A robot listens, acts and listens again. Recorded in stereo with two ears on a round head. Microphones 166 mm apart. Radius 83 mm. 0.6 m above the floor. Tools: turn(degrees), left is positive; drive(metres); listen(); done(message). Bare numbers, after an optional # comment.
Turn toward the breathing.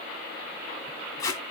listen()
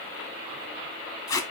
listen()
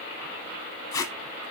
done("I can't make out breathing to turn to.")